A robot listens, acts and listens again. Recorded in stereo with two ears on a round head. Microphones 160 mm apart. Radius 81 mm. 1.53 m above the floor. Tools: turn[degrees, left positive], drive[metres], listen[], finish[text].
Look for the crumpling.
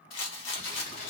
Thought: The crumpling: about 50° left or 130° left.
Action: turn[50]
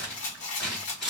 Action: finish[Facing the crumpling, 1 to 2 m away.]